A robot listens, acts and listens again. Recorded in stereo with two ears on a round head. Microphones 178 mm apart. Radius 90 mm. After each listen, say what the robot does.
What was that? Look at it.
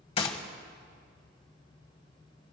Turn 30° left.
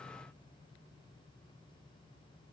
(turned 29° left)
Keep listening.
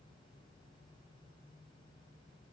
I heard a gunshot, but can't make it out now. It was about straight ahead or 120° left.